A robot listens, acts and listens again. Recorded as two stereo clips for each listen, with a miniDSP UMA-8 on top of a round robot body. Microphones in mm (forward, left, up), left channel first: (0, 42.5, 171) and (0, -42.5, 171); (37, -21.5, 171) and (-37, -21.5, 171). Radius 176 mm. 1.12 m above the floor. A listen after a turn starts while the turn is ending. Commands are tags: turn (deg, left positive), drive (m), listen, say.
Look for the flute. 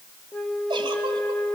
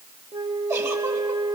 <turn deg="175"/>
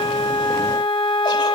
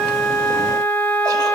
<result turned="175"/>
<turn deg="65"/>
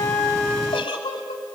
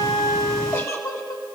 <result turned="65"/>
<say>Facing the flute.</say>